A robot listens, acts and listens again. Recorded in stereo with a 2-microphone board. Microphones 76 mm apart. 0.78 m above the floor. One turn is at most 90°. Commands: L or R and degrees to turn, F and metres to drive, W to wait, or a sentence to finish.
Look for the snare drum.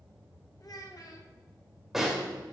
R30
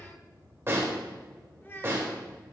R90
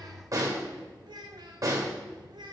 R50
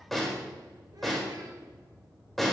Found it: a snare drum, straight ahead.